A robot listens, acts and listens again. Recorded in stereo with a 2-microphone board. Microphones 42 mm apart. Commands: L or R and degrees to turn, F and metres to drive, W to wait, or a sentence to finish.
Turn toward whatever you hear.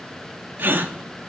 R50
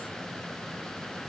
W
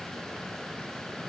I heard a gasp, but can't make it out now. It was about straight ahead or 80° right.